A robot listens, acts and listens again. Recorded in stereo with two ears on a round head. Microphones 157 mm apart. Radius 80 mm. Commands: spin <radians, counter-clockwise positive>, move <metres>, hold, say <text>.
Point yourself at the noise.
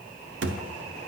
spin -1.13
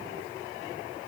hold
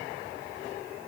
say I heard a thud, but can't make it out now. It was about straight ahead or 50° right.